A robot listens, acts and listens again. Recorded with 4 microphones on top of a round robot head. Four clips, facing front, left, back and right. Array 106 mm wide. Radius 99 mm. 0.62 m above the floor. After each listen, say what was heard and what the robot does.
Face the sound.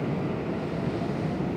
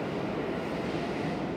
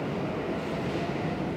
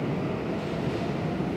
Keep listening.
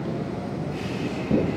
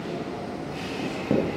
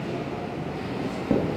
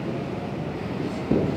The writing: 135° left. Turn 135° left.
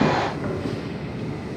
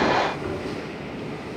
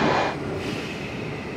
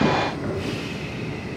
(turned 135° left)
Keep listening.
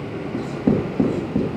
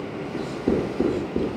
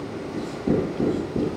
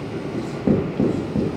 The writing is now 40° right. Turn 40° right.
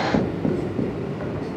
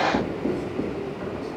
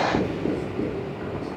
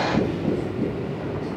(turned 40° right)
Facing the writing, 2 to 4 m away.